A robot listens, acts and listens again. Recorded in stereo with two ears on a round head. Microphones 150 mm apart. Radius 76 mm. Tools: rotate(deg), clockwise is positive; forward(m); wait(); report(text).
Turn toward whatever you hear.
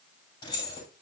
rotate(-30)
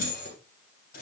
rotate(-120)
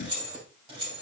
rotate(30)
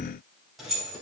report("Facing the keys jangling.")